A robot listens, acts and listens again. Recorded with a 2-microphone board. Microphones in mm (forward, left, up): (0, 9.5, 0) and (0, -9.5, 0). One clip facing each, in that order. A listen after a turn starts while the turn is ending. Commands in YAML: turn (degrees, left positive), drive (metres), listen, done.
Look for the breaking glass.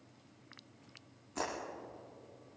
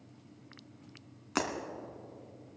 turn: -60
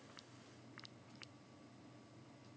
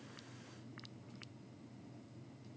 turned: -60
listen: true
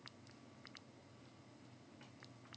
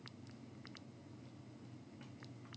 done: "I heard breaking glass, but can't make it out now. It was about straight ahead or 60° right."